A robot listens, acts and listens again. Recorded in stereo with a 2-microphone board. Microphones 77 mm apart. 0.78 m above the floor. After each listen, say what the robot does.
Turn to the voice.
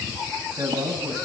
Turn 55° right.
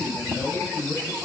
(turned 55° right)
Facing the man speaking.